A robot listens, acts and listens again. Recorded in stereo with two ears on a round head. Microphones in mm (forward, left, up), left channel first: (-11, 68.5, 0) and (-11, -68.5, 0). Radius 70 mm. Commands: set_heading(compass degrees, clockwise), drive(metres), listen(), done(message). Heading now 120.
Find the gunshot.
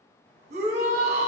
listen()
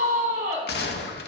set_heading(45)
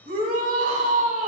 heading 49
listen()
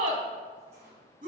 done("I heard a gunshot, but can't make it out now. It was about 5° left or 35° left.")